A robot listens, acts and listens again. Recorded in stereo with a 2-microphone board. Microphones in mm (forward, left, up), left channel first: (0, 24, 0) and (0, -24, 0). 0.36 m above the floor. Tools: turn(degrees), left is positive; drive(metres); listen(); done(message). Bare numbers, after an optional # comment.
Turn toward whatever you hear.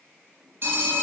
# The phone ringing: about 55° right or 125° right.
turn(-55)
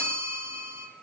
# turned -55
# So it is at 65° right.
turn(-65)
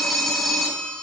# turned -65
done("Facing the phone ringing.")